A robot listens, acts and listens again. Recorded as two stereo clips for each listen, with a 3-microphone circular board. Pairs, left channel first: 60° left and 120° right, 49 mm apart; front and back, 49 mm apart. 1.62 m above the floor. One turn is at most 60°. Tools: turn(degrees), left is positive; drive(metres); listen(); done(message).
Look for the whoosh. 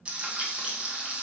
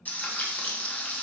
listen()
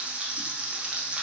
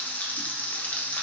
listen()
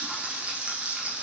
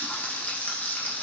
done("I can't make out a whoosh, only frying.")